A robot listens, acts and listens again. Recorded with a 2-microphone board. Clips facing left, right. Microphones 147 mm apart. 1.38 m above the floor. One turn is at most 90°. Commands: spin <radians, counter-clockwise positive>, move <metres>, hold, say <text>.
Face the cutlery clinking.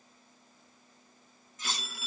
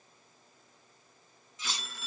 spin 0.87
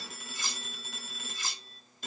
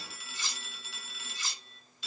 spin 1.13
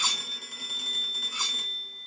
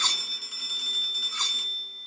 spin 0.17
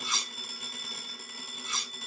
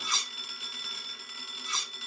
say Facing the cutlery clinking.